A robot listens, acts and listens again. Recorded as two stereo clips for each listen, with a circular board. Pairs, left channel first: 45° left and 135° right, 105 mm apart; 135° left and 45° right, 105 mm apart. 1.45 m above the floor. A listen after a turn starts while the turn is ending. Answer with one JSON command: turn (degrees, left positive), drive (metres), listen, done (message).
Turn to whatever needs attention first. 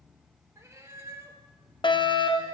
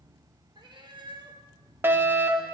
{"turn": 20}
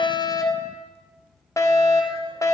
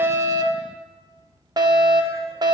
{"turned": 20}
{"done": "Found it: a fire alarm, straight ahead."}